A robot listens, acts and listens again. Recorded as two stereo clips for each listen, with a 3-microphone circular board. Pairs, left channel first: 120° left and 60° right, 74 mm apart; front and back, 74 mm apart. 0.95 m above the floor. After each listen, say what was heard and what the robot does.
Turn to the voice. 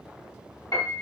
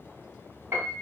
Keep listening.
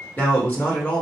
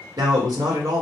The man speaking: 175° left. Turn 175° left.
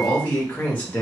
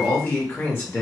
The man speaking is now 55° left. Turn 55° left.
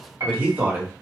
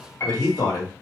Facing the man speaking.